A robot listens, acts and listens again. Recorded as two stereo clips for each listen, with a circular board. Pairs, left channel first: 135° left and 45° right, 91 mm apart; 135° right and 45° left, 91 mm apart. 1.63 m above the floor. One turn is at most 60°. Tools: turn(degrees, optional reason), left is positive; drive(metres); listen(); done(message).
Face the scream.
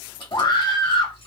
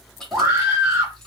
turn(degrees=60, reason="The scream: 105° left.")
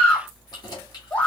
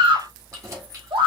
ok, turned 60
turn(degrees=60, reason="The scream is now 65° left.")
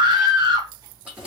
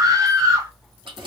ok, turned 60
done("Found it: a scream, straight ahead.")